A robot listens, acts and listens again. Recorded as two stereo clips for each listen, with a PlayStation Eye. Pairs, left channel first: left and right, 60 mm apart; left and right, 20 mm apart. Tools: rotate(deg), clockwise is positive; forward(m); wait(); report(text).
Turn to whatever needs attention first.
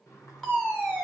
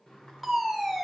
rotate(-30)
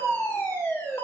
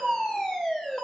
rotate(-135)
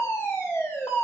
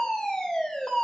rotate(-45)
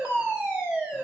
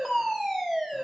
rotate(25)
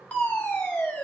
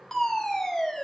rotate(-25)
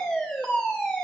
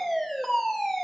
report("Found it: a fire alarm, straight ahead.")